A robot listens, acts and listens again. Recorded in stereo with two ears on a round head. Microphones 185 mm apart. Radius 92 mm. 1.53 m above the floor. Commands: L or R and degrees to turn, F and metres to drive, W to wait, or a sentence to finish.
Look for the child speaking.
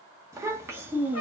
R30
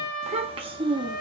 R20
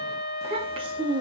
R20
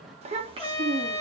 R20
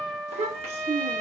R155
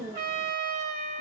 R15
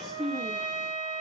Facing the child speaking, 1 to 2 m away.